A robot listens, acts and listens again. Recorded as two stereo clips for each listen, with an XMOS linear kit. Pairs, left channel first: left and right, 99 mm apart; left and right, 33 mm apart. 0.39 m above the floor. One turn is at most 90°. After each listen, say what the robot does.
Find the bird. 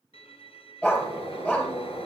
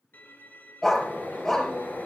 Turn 70° left.
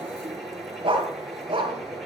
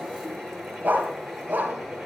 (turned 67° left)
Facing the bird.